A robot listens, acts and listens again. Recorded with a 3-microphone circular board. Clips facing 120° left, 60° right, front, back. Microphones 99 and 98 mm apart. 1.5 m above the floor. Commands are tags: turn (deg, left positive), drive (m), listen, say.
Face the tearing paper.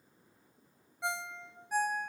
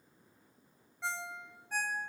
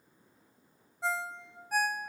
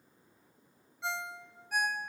<listen/>
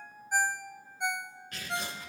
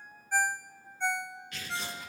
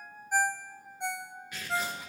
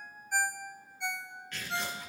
<turn deg="80"/>
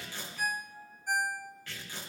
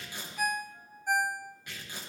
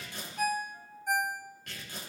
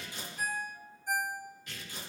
<turn deg="10"/>
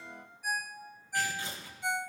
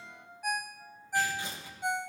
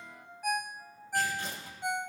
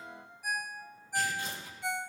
<say>Facing the tearing paper.</say>